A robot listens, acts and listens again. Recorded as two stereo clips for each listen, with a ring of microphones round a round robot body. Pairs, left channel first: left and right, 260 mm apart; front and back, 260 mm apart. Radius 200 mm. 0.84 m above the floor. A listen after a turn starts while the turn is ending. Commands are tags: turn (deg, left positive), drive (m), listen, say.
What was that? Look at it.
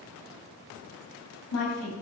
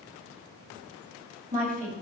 <turn deg="120"/>
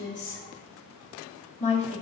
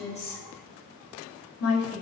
<turn deg="25"/>
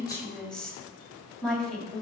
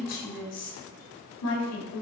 <say>Facing the woman speaking, 2 to 4 m away.</say>